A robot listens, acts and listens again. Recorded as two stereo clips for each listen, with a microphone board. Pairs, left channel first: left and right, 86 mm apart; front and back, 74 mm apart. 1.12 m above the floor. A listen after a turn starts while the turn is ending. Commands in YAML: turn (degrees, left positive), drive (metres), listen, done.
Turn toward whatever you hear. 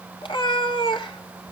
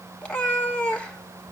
turn: 75
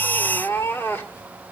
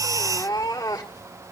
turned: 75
turn: 25
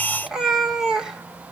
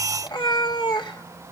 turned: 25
done: "Facing the cat meowing, 1 to 2 m away."